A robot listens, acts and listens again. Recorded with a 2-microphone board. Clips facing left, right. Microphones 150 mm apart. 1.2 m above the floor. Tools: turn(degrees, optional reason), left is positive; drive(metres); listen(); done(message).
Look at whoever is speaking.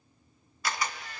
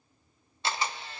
listen()
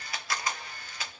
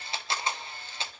listen()
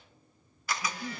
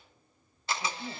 turn(degrees=-90)
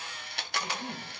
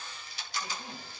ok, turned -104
done("Facing the woman speaking.")